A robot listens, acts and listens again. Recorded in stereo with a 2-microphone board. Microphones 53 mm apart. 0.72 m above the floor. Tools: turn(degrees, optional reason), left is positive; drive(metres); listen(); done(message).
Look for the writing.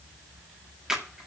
listen()
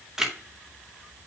listen()
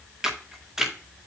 done("I can't make out writing, only a camera shutter.")